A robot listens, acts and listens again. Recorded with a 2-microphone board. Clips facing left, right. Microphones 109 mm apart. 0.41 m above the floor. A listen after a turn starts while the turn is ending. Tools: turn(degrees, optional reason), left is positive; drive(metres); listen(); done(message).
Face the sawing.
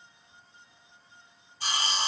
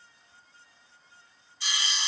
turn(degrees=45, reason="The sawing: about 45° left or 135° left.")
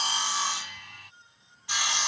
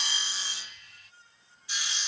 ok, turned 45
turn(degrees=90, reason="So it is at 90° left.")
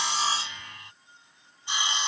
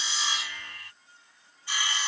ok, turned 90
turn(degrees=20, reason="The sawing is now 20° left.")
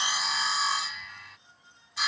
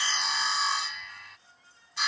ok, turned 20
done("Facing the sawing.")